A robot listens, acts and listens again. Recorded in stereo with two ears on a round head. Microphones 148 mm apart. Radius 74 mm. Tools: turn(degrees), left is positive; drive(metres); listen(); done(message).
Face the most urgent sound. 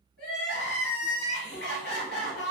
turn(degrees=65)
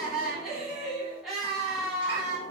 done("Facing the crying, 1 to 2 m away.")